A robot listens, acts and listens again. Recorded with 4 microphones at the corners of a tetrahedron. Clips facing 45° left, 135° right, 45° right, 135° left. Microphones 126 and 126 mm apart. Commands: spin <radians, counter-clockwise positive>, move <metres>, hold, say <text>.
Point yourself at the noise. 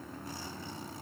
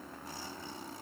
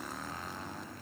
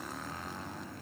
hold
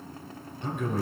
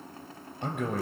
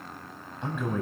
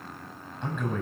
spin -2.18
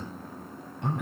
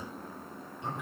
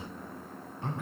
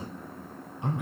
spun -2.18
spin 1.05
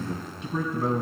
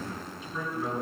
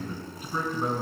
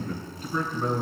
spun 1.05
spin 0.61
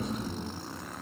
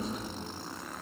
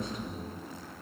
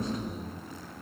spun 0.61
spin 0.26
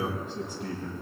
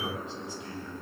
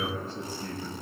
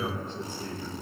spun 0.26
say Facing the man speaking, 2 to 4 m away.